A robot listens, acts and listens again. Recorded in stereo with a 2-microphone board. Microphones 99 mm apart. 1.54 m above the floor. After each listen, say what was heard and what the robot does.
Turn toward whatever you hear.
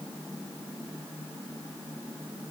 Keep listening.
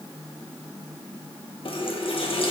The running tap: about 60° left or 120° left. Turn 60° left.
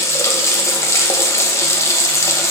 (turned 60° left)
So it is at 35° left. Turn 35° left.
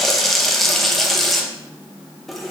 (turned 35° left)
Facing the running tap, 1 to 2 m away.